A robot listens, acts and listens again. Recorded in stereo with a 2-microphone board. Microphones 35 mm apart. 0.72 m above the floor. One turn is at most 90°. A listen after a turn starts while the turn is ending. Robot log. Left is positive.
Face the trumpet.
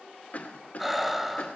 cmd idle
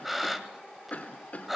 cmd idle
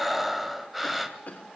end: I can't make out a trumpet, only breathing and a cough.